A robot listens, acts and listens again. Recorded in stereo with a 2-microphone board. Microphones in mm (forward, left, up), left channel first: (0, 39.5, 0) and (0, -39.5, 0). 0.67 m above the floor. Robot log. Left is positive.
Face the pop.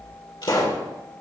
cmd yaw +90
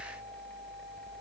end: I heard a pop from this way, but can't make it out now.